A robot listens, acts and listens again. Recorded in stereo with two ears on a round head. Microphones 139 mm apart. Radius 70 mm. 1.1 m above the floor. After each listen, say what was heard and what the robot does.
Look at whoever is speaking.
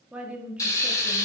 Turn 30° right.
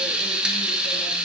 Keep listening.
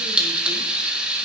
Keep listening.
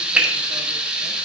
I heard a woman speaking, but can't make it out now. It was about 20° left or 140° right.